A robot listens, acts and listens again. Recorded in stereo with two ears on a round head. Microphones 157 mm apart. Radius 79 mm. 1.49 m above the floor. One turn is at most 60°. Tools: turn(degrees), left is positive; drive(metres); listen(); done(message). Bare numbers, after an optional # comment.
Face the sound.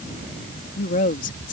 # The woman speaking: about 45° left or 135° left.
turn(45)
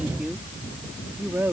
# So it is at 10° right.
turn(-10)
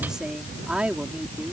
# The woman speaking is now 10° right.
turn(-10)
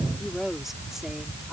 done("Facing the woman speaking.")